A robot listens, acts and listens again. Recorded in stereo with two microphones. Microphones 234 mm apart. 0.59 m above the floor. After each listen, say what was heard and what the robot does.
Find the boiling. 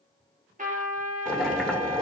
Turn 30° left.
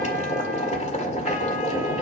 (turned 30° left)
So it is at 145° left. Turn 145° left.
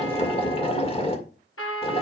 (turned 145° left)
The boiling is now 30° left. Turn 30° left.
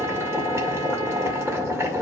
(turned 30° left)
The boiling is now 15° right. Turn 15° right.
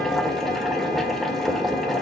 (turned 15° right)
Found it: boiling, straight ahead.